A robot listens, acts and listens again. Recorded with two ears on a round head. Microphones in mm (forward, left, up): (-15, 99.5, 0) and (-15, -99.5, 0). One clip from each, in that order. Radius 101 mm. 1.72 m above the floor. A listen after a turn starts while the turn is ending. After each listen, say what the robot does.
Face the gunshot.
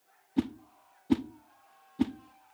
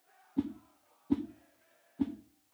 Keep listening.
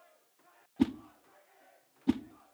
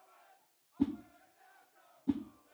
Keep listening.
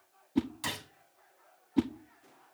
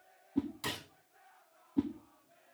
Turn 15° left.
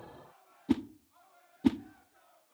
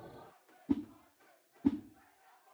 Keep listening.
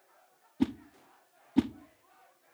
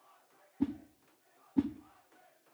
I heard a gunshot, but can't make it out now. It was about straight ahead or 150° left.